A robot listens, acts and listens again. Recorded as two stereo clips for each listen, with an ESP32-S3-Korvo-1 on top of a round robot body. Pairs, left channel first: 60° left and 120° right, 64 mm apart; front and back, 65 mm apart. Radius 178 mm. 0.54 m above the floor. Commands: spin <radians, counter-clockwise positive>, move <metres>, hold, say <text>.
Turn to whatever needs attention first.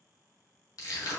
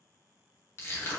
hold
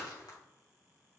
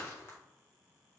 hold
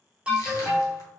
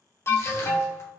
spin -0.87
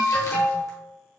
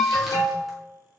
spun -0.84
say Found it: an alarm, straight ahead, 1 to 2 m away.